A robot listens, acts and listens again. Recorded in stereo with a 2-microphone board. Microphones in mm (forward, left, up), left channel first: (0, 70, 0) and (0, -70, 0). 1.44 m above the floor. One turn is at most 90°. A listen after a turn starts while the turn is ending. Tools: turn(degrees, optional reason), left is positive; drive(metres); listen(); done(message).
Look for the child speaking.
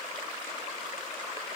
listen()
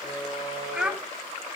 turn(degrees=-30)
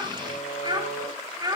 turn(degrees=-90, reason="So it is at 155° right.")
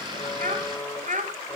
turn(degrees=-60, reason="The child speaking is now 60° right.")
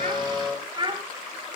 turn(degrees=-35, reason="The child speaking is now 35° right.")
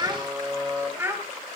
turn(degrees=-20, reason="The child speaking is now 20° right.")
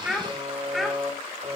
done("Found it: a child speaking, straight ahead.")